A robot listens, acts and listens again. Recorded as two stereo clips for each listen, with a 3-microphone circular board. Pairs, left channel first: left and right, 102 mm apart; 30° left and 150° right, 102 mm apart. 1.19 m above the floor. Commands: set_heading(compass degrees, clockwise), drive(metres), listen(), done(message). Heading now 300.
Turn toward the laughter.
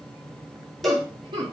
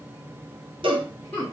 set_heading(345)
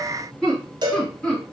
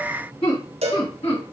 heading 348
set_heading(338)
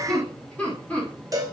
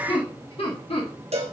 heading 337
set_heading(322)
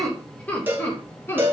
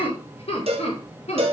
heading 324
set_heading(299)
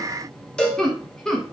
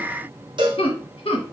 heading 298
done("Found it: laughter, straight ahead.")